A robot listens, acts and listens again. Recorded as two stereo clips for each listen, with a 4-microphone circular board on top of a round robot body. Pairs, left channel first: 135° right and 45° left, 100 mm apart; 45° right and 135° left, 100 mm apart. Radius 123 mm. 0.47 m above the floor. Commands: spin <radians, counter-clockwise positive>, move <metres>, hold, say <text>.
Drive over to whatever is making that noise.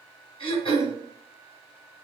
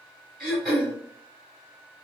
spin -2.36
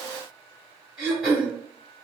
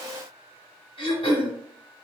spin -0.70
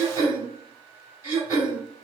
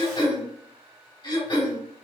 spin -0.26
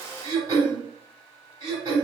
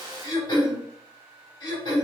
move 1.0
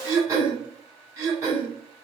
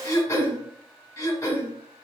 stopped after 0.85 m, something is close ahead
say I am next to the throat clearing.